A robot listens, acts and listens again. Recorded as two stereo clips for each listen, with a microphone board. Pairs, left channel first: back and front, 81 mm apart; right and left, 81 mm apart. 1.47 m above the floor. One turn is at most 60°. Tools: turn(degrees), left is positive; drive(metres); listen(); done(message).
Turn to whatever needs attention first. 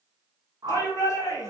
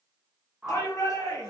turn(degrees=-60)
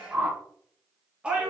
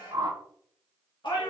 turn(degrees=-60)
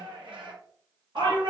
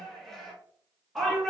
done("Facing the shout, 1 to 2 m away.")